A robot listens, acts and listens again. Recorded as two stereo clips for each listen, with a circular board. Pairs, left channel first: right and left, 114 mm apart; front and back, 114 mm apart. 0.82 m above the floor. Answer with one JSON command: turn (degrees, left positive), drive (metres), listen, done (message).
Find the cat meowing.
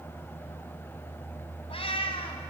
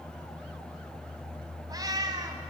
{"turn": -125}
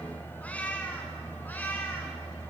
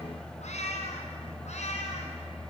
{"turn": -15}
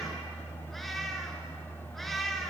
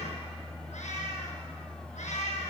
{"done": "Found it: a cat meowing, straight ahead, over 4 m away."}